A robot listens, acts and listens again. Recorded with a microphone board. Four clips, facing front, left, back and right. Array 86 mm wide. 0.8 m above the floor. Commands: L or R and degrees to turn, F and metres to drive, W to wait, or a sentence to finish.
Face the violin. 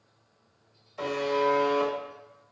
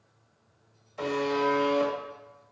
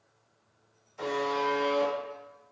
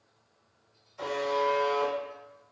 W
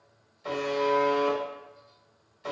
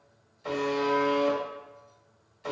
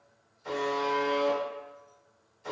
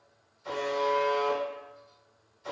W
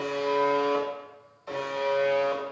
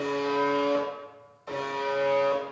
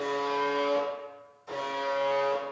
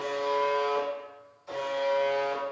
I can't make out a violin to turn to.